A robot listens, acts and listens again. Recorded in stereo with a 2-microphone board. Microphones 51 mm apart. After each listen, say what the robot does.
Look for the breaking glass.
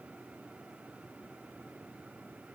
Keep listening.
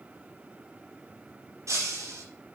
Turn 90° right.
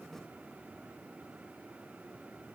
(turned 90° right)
Facing where the breaking glass came from. I can't hear it now.